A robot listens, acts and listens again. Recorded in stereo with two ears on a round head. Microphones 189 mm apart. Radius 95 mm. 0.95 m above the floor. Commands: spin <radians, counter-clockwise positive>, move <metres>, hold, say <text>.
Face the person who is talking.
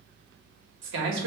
spin -1.05
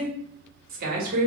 spin -0.87
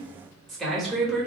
say Facing the man speaking.